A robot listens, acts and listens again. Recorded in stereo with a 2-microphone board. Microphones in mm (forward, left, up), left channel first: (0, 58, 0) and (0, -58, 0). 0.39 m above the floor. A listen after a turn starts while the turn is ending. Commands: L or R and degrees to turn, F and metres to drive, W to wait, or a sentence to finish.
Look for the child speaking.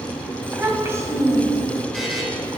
R30
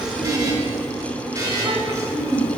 R30
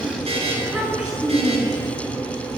Facing the child speaking, over 4 m away.